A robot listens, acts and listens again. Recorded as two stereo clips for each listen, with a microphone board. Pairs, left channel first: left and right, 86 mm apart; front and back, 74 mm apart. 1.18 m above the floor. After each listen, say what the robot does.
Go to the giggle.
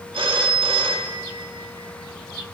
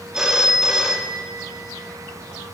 Keep listening.
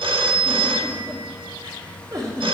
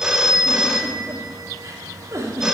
Turn 130° right.
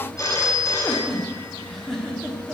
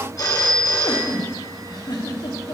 Drive 1.0 m forward.
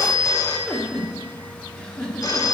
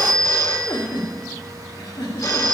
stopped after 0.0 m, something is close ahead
Turn 10° left.
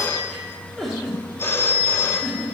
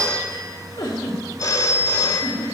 Something is in my way. I am facing the giggle but have not reached it.